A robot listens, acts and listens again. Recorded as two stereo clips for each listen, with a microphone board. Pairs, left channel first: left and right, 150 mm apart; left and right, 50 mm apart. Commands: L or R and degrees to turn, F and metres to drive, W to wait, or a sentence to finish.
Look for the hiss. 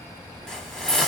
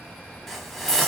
L30
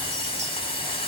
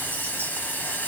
L145
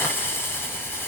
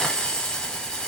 L15
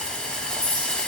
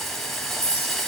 L10
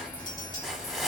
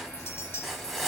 Found it: a hiss, straight ahead.